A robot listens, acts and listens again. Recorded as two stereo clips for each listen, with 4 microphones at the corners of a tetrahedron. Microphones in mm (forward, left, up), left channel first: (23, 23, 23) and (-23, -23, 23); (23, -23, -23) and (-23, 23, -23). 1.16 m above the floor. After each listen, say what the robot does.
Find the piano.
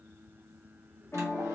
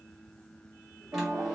Turn 90° left.
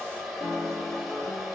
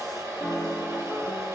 Facing the piano, under 1 m away.